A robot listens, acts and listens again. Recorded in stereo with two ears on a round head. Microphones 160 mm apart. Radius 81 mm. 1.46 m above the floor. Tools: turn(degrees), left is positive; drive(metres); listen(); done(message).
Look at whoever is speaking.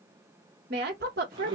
turn(degrees=-50)
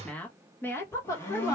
turn(degrees=20)
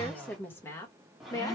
turn(degrees=20)
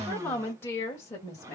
turn(degrees=20)
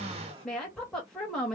done("Facing the woman speaking, 2 to 4 m away.")